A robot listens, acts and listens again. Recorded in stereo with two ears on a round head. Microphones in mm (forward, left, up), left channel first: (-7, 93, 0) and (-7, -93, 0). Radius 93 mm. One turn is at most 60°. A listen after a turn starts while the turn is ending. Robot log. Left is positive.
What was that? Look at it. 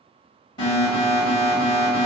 note: The alarm: about 25° left or 155° left.
cmd yaw +25
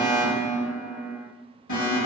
note: So it is at 130° left.
cmd yaw +60
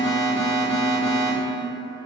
note: The alarm is now 100° left.
cmd yaw +60
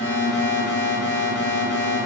note: The alarm is now 40° left.
cmd yaw +40
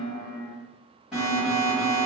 end: Found it: an alarm, straight ahead, 1 to 2 m away.